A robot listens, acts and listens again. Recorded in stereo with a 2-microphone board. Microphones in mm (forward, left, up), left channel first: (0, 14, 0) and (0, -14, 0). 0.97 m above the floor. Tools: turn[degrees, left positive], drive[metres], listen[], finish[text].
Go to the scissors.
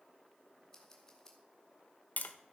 Thought: The scissors: about 20° left or 160° left.
Action: turn[20]
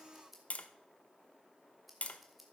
Action: drive[1.0]
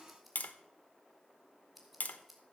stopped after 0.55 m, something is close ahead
Action: finish[Blocked. The scissors is further on, straight ahead.]